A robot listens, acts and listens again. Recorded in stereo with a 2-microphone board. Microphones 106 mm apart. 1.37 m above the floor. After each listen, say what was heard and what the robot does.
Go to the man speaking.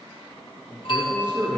The man speaking: about 15° left or 165° left. Turn 15° left.
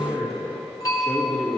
Drive 1.0 m forward.
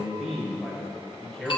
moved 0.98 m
Drive 1.0 m forward.
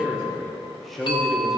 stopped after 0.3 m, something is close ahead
I am next to the man speaking.